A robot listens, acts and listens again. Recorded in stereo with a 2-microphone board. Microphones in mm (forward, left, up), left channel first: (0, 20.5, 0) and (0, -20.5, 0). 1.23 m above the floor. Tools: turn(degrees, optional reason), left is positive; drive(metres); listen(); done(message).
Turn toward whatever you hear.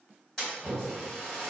turn(degrees=15, reason="The splash: about 15° left or 165° left.")
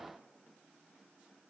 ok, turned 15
listen()
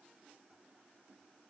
done("I heard a splash, but can't make it out now. It was about straight ahead or 150° left.")